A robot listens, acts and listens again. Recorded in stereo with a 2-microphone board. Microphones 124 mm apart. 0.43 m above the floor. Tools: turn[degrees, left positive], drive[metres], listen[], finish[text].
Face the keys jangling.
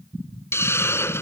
Action: listen[]
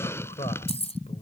Thought: The keys jangling: about 55° left or 125° left.
Action: turn[55]
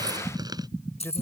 Thought: So it is at 55° left.
Action: turn[55]
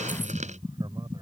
Action: listen[]
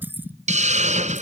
Thought: The keys jangling is now 15° right.
Action: turn[-15]
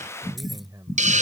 Action: listen[]
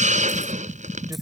Action: listen[]
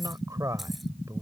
Action: finish[I heard keys jangling from this way, but can't make it out now.]